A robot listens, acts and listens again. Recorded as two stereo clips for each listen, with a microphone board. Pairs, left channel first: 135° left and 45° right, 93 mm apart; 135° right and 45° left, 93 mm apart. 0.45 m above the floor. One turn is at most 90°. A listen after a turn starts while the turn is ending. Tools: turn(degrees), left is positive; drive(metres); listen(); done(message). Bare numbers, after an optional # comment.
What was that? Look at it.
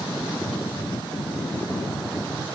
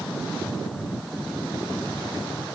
listen()
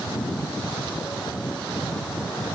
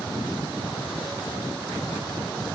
listen()
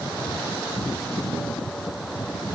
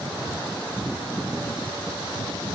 done("I can't make out anything to turn to.")